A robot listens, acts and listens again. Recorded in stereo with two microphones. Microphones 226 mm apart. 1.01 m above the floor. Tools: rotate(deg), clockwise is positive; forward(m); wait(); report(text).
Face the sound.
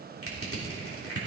rotate(-90)
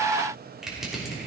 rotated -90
report("Facing the crushing.")